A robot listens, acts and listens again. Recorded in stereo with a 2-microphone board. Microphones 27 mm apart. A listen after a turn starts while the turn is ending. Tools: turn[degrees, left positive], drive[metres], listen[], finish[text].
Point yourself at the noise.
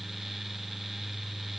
Action: listen[]
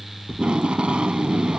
Thought: The tape being pulled: about 45° right or 135° right.
Action: turn[-45]
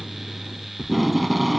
Action: finish[Found it: tape being pulled, straight ahead.]